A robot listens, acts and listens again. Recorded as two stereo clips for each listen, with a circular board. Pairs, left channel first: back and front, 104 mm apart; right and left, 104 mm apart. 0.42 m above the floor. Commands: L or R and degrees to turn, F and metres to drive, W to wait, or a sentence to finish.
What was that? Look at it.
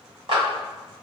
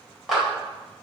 Facing the clap, 1 to 2 m away.